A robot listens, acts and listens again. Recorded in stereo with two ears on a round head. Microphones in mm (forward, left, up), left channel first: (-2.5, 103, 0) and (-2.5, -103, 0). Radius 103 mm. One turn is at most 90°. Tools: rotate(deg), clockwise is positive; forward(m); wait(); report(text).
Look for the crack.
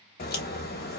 rotate(-45)
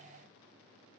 wait()
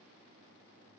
report("I heard a crack, but can't make it out now. It was about straight ahead or 90° left.")